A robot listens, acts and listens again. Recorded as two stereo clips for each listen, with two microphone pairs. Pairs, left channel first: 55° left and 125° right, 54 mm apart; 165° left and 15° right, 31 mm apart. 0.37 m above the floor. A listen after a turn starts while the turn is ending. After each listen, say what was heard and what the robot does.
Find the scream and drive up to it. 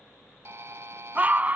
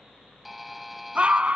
The scream: 65° right. Turn 65° right.
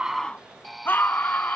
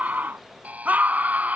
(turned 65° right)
The scream is now 10° left. Turn 10° left.
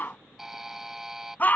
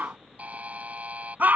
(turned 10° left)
Drive 1.0 m forward.
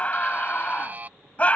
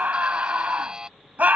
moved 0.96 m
Drive 1.0 m forward.
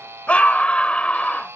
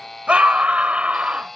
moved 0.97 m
Drive 1.0 m forward.
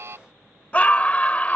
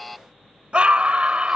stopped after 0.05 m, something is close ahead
Arrived at the scream, straight ahead.